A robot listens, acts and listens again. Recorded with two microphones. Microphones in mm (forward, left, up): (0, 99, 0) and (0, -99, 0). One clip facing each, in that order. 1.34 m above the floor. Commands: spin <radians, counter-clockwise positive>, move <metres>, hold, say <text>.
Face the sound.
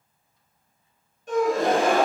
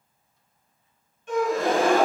spin 0.70
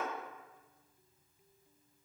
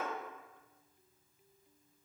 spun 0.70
hold
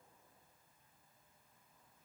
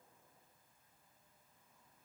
say I heard a gasp, but can't make it out now. It was about straight ahead or 100° left.